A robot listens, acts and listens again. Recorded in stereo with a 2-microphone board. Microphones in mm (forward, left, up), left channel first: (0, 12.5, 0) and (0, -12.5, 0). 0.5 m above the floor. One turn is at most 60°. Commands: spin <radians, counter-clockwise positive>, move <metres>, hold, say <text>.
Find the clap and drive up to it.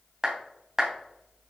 spin -0.35
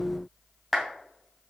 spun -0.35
move 1.0
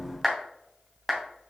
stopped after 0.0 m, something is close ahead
say Something is in my way. I am facing the clap but have not reached it.